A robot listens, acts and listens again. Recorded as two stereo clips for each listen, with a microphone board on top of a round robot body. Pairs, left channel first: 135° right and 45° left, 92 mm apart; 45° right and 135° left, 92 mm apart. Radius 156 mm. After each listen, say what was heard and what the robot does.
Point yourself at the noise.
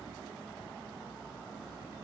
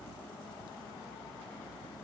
Keep listening.
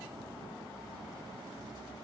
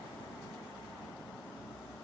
Keep listening.
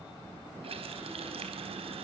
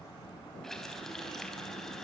The running tap: 40° left. Turn 40° left.
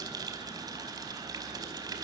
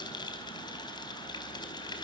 Found it: a running tap, straight ahead.